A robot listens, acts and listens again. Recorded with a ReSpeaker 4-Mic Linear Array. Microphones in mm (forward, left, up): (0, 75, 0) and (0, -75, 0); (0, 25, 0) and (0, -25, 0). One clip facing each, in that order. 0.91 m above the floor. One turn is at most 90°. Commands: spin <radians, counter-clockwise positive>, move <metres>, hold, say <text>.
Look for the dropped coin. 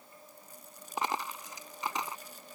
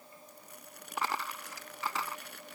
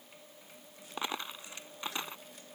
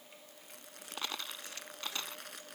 spin 0.35
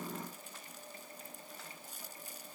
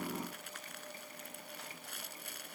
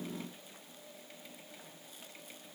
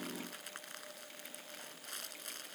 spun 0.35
hold
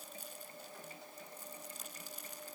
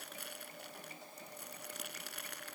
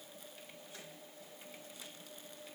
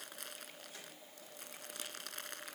say I heard a dropped coin, but can't make it out now. It was about straight ahead or 140° left.